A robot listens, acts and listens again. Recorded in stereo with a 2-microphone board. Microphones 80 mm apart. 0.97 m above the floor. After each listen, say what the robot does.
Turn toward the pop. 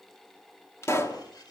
Turn 35° left.
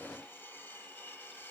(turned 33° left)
Keep listening.
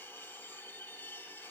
I heard a pop, but can't make it out now. It was about 5° left or 110° left.